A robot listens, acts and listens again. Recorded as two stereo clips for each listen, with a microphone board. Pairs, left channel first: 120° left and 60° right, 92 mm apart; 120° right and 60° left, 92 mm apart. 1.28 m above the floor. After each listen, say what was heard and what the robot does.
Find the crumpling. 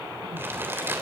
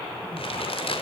The crumpling: 125° right. Turn 125° right.
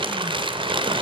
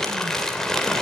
The crumpling is now 35° right. Turn 35° right.
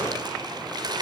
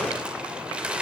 The crumpling is now 20° right. Turn 20° right.
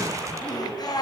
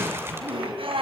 Keep listening.
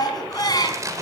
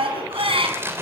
Found it: crumpling, straight ahead.